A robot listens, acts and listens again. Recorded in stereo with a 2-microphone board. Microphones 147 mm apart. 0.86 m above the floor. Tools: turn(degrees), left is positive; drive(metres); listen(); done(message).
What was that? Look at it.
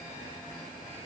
listen()
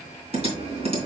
turn(degrees=-45)
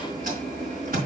turn(degrees=-95)
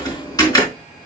turn(degrees=25)
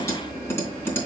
turn(degrees=15)
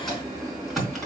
done("Found it: typing on a keyboard, straight ahead, 2 to 4 m away.")